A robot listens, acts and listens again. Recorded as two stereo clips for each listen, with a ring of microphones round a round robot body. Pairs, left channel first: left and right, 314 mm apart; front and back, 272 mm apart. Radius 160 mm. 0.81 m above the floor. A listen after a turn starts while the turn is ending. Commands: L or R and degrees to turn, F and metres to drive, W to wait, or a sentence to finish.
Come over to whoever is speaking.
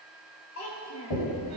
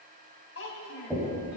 L40
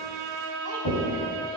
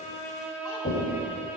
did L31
L10
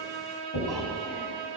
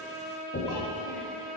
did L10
W
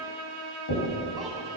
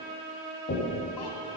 I heard a child speaking from this way, but can't make it out now. I did not reach it.